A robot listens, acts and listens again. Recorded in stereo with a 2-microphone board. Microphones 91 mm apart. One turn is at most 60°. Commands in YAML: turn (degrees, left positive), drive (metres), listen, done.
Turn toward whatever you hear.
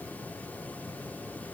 listen: true
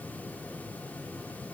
listen: true
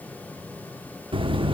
turn: -60
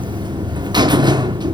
turn: -50
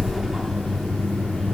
done: "Found it: a buzzer, straight ahead."